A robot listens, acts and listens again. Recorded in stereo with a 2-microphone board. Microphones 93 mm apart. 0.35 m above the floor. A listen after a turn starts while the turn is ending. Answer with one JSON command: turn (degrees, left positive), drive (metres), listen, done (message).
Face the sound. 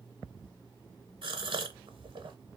{"turn": -70}
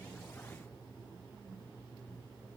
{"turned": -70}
{"listen": true}
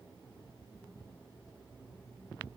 {"done": "I heard a gasp, but can't make it out now. It was about straight ahead or 40° right."}